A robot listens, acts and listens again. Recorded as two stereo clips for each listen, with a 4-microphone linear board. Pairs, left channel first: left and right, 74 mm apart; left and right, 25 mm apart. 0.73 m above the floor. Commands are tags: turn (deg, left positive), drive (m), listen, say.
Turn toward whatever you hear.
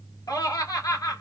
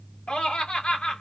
<turn deg="55"/>
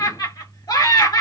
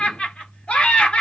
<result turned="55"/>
<turn deg="70"/>
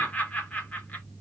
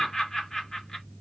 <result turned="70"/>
<turn deg="20"/>
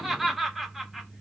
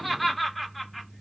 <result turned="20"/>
<say>Facing the laughter, 1 to 2 m away.</say>